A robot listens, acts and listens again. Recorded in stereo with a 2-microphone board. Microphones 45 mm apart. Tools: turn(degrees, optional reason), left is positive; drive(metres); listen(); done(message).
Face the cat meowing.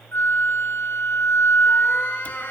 turn(degrees=35, reason="The cat meowing: about 35° left or 145° left.")
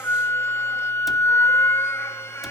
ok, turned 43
listen()
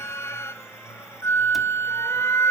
listen()
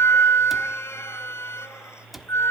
done("I heard a cat meowing, but can't make it out now. It was about 10° right or 100° left.")